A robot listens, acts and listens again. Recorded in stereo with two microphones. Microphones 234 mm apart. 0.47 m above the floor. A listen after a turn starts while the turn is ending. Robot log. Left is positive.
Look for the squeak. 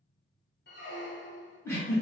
note: The squeak: about 50° left or 130° left.
cmd yaw +50
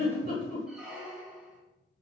end: Found it: a squeak, straight ahead.